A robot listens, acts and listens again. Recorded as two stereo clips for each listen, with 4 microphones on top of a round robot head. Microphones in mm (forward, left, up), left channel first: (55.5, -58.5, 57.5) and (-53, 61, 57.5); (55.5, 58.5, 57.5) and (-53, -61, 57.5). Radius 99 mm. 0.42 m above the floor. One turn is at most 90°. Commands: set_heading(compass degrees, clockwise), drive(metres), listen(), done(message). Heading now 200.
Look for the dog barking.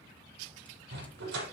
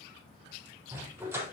set_heading(110)
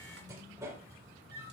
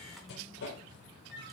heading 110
set_heading(50)
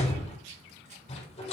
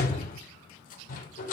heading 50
set_heading(40)
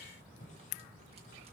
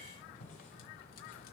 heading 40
listen()
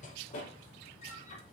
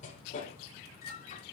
done("Facing the dog barking.")